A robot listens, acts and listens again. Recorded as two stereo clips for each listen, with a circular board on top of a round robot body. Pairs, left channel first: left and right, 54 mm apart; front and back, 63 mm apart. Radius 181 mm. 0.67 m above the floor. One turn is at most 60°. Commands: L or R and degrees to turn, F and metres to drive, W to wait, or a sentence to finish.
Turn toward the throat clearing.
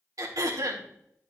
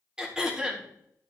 R60
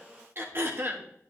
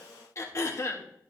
R45
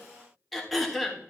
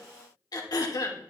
Found it: throat clearing, straight ahead, 1 to 2 m away.